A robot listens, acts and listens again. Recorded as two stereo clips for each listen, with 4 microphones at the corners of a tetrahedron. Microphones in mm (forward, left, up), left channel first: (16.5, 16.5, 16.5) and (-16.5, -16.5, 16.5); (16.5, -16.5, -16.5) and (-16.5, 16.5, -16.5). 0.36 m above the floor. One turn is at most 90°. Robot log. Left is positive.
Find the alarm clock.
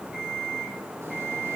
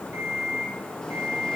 note: The alarm clock: 140° left.
cmd yaw +90
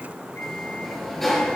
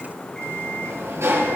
note: Nothing new. It was at 50° left.
cmd yaw +50
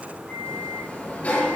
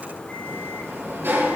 cmd idle
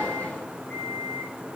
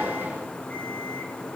end: Facing where the alarm clock came from. I can't hear it now.